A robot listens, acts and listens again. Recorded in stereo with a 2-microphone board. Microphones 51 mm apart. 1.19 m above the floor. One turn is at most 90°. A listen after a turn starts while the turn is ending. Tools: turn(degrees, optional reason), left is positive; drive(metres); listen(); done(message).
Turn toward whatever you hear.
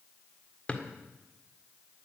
turn(degrees=25, reason="The drawer: about 25° left or 155° left.")
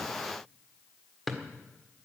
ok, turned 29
done("Facing the drawer, 1 to 2 m away.")